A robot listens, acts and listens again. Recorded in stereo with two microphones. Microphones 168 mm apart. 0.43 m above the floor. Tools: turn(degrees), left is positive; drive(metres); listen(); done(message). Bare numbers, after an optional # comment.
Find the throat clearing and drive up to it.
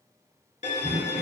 turn(-90)
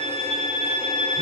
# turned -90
listen()
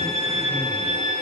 listen()
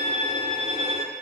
done("I heard throat clearing from this way, but can't make it out now. I did not reach it.")